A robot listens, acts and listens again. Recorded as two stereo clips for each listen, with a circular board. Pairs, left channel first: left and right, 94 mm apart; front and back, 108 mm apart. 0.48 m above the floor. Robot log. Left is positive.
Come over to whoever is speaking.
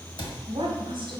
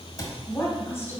note: The woman speaking: 65° right.
cmd yaw -65
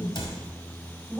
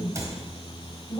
cmd fwd 1.0
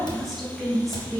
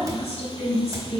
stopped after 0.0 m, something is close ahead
end: Something is in my way. I am facing the woman speaking but have not reached it.